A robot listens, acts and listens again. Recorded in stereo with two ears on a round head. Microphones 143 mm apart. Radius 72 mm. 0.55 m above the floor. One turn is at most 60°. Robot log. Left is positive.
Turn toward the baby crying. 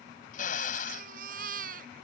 note: The baby crying: about 55° right or 125° right.
cmd yaw -55
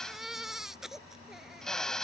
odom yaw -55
end: Found it: a baby crying, straight ahead.